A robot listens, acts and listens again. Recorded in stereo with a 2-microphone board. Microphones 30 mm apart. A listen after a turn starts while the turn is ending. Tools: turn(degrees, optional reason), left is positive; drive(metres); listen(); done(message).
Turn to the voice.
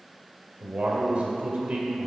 turn(degrees=-45, reason="The man speaking: about 45° right or 135° right.")
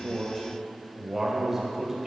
turn(degrees=-10, reason="So it is at 10° right.")
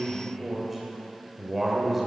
done("Facing the man speaking, 2 to 4 m away.")